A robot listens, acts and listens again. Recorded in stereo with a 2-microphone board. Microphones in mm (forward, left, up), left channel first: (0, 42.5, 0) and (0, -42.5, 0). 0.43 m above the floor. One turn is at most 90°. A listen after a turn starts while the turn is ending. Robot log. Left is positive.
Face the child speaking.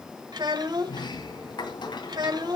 note: The child speaking: about 60° right or 120° right.
cmd yaw -60
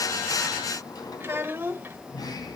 note: So it is at 30° right.
cmd yaw -30
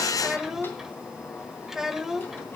end: Found it: a child speaking, straight ahead, 1 to 2 m away.